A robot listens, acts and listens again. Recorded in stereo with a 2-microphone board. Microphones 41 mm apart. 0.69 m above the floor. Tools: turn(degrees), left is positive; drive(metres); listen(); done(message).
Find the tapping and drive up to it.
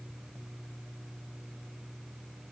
listen()
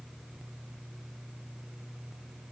listen()
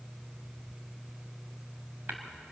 turn(degrees=-55)
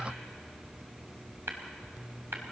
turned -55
turn(degrees=-70)
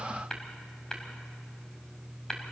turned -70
turn(degrees=15)
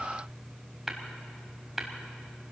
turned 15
drive(metres=1.0)
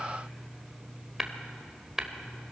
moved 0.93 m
turn(degrees=-10)
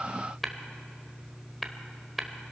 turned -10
drive(metres=1.0)
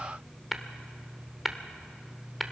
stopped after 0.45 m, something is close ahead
done("I am next to the tapping.")